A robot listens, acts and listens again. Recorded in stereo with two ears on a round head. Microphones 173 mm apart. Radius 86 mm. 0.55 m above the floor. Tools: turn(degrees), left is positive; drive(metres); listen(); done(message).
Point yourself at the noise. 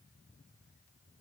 listen()
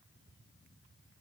listen()
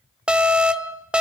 turn(degrees=-30)
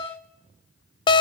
turn(degrees=25)
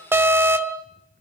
turn(degrees=-10)
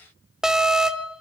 done("Facing the alarm, under 1 m away.")